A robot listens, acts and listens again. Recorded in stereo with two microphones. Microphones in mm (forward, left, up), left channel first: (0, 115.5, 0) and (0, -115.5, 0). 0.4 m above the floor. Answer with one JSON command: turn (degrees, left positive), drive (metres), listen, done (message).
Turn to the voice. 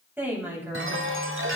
{"turn": -30}
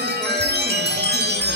{"listen": true}
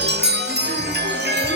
{"listen": true}
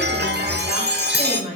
{"turn": -140}
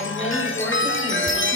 {"listen": true}
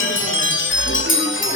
{"listen": true}
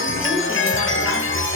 {"done": "I heard a woman speaking from this way, but can't make it out now."}